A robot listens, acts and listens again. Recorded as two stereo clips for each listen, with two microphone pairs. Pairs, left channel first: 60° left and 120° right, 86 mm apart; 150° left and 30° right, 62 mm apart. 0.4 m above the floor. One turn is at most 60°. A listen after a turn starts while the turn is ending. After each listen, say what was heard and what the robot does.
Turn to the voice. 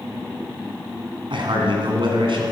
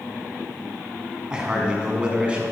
The man speaking: 105° right. Turn 60° right.
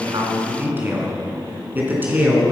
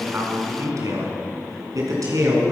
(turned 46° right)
The man speaking is now 50° right. Turn 50° right.
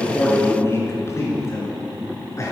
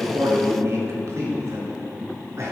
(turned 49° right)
Found it: a man speaking, straight ahead, over 4 m away.